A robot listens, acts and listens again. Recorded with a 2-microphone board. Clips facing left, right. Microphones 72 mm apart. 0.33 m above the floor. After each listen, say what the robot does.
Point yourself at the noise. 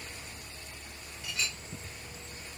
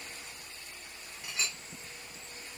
Turn 25° right.
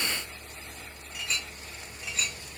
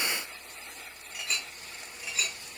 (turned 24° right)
Facing the clink.